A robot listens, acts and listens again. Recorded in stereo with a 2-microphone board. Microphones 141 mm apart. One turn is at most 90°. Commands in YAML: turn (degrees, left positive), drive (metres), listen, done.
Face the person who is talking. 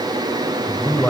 turn: 30
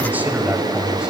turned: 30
turn: -10
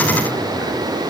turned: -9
listen: true
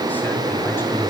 listen: true
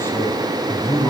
turn: 20
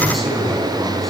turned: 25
done: "Facing the man speaking, over 4 m away."